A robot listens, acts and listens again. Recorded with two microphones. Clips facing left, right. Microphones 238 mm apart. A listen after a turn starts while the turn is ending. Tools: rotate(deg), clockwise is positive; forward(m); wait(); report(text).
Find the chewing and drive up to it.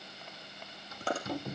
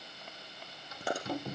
rotate(30)
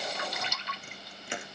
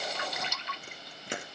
rotate(140)
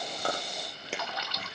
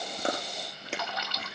forward(1.0)
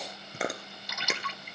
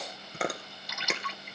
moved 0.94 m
forward(1.0)
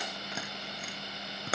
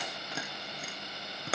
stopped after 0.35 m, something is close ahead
report("I am next to the chewing.")